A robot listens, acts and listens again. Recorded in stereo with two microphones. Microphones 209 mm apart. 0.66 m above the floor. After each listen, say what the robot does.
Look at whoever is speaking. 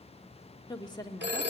Turn 20° left.
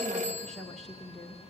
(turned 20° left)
Facing the woman speaking, 1 to 2 m away.